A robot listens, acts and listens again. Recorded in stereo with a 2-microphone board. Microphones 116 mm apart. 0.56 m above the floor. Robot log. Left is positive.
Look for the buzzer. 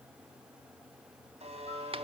note: The buzzer: about 65° right or 115° right.
cmd yaw -65
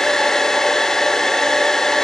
cmd idle
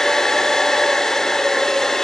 cmd idle
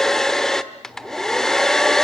end: I heard a buzzer, but can't make it out now. It was about straight ahead or 50° right.